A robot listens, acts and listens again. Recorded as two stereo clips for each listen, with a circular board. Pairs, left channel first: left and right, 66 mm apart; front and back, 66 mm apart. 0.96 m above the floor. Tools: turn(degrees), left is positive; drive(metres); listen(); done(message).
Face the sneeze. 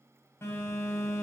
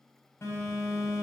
listen()
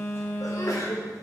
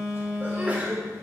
turn(degrees=115)
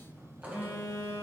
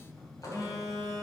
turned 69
turn(degrees=45)
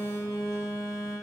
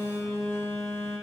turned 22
turn(degrees=25)
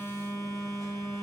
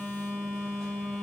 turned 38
turn(degrees=-15)
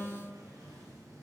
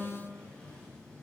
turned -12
done("Facing where the sneeze came from. I can't hear it now.")